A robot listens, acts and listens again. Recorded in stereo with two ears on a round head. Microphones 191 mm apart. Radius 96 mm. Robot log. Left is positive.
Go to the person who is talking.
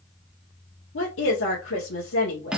note: The woman speaking: about 70° left or 110° left.
cmd yaw +70
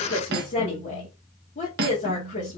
note: So it is at 40° left.
cmd yaw +40
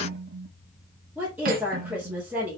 cmd fwd 1.0
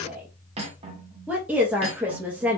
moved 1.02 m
cmd fwd 1.0
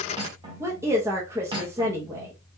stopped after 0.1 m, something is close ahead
note: The woman speaking is now 15° right.
cmd yaw -15
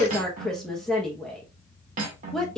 end: Arrived at the woman speaking, straight ahead.